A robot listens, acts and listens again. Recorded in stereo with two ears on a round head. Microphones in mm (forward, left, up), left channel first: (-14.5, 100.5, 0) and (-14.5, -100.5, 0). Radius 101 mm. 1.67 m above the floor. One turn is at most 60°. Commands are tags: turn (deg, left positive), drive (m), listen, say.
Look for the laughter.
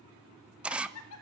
<turn deg="60"/>
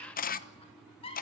<turn deg="25"/>
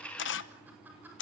<listen/>
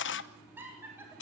<turn deg="-10"/>
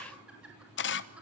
<listen/>
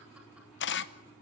<listen/>
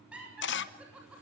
<say>Facing the laughter.</say>